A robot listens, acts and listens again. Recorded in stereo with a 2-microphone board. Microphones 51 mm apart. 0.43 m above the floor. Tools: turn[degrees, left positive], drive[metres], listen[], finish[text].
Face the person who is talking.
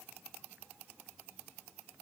Action: listen[]
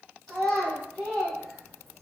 Action: turn[30]
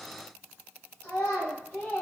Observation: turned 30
Thought: So it is at 150° left.
Action: turn[150]
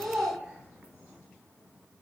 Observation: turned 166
Thought: The child speaking is now 15° right.
Action: turn[-15]
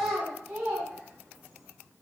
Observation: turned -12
Action: finish[Found it: a child speaking, straight ahead.]